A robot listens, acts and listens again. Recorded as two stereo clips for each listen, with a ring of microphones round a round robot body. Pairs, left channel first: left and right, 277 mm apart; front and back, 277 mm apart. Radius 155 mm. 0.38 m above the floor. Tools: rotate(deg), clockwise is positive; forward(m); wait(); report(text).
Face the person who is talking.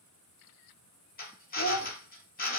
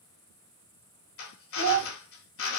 rotate(-155)
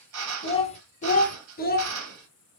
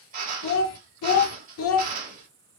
rotate(-35)
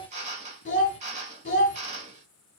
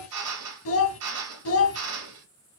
rotate(-30)
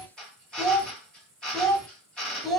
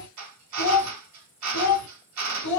report("Found it: a child speaking, straight ahead, 1 to 2 m away.")